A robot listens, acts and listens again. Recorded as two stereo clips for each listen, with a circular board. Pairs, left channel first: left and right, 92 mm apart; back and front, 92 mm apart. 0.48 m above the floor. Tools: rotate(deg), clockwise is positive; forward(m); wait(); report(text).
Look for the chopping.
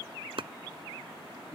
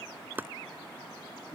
rotate(65)
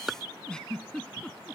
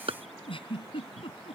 report("Found it: chopping, straight ahead.")